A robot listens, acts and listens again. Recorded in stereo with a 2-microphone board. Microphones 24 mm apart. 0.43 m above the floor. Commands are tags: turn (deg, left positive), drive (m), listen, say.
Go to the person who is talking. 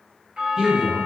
<turn deg="-30"/>
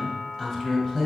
<drive m="1.0"/>
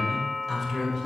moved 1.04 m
<drive m="1.0"/>
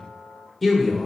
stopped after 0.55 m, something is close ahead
<turn deg="10"/>
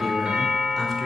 <listen/>
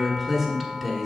<say>Arrived at the man speaking, straight ahead.</say>